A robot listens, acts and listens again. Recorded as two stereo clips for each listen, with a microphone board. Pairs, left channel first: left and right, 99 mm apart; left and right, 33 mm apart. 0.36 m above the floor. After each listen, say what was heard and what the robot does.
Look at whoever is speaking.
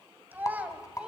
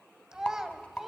Turn 30° right.
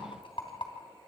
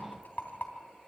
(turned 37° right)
Keep listening.
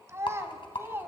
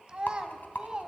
So it is at 155° right. Turn 155° right.
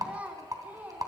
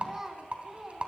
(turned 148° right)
The child speaking is now 15° right. Turn 15° right.
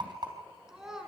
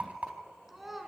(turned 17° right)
Found it: a child speaking, straight ahead, 2 to 4 m away.